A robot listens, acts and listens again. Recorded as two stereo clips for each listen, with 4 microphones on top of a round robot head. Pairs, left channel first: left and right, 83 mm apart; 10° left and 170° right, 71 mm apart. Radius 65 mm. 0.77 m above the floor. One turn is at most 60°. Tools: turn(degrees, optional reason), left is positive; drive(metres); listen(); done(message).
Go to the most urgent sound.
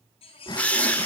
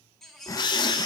turn(degrees=60, reason="The baby crying: 100° left.")
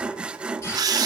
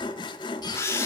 turn(degrees=40, reason="Nothing new. It was at 40° left.")
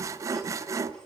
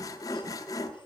listen()
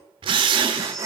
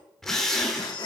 done("I heard a baby crying from this way, but can't make it out now. I did not reach it.")